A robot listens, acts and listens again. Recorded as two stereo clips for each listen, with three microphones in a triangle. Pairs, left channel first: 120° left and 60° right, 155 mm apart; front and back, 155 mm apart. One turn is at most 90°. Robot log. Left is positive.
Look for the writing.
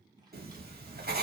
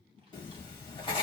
note: The writing: 60° right.
cmd yaw -60
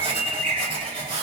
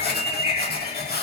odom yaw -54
end: Facing the writing.